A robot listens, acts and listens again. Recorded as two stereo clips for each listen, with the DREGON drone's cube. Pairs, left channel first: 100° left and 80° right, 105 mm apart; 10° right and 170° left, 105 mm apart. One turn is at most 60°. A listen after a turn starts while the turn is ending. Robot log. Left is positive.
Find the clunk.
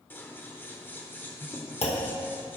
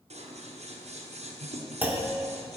note: The clunk: 95° left.
cmd yaw +60
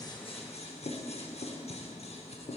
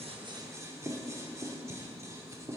note: Nothing new. It was at 35° left.
cmd yaw +35
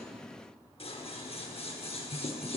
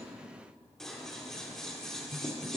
end: Facing where the clunk came from. I can't hear it now.